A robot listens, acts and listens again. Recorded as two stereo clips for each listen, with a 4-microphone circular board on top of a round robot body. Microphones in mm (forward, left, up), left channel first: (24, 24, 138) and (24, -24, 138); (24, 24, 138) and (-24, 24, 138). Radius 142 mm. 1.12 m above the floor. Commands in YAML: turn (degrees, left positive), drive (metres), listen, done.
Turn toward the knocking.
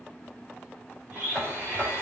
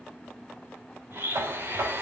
turn: 180
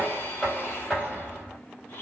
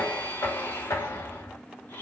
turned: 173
done: "Facing the knocking, 2 to 4 m away."